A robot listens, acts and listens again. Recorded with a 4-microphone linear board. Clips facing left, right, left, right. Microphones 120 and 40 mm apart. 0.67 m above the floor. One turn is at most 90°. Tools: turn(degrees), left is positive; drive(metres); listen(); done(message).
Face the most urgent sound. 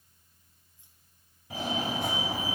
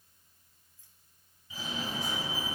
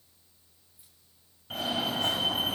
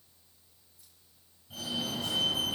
turn(degrees=65)
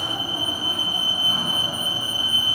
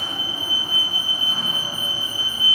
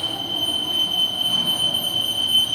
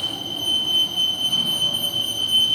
done("Found it: a fire alarm, straight ahead, over 4 m away.")